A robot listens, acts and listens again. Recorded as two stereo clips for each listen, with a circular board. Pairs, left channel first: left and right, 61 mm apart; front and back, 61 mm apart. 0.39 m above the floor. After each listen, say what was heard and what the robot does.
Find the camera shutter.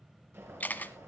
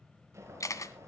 The camera shutter: 25° left. Turn 25° left.
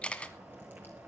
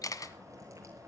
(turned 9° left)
The camera shutter is now 15° left. Turn 15° left.
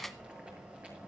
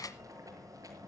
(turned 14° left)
Facing the camera shutter, 1 to 2 m away.